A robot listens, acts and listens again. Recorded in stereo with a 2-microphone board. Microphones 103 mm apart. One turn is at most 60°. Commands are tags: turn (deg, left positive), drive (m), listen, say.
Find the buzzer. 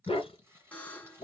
<turn deg="15"/>
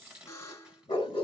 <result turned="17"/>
<turn deg="60"/>
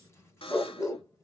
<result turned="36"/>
<turn deg="60"/>
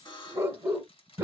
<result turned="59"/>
<turn deg="50"/>
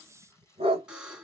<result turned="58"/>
<turn deg="-10"/>
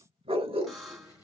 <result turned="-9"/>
<say>Found it: a buzzer, straight ahead.</say>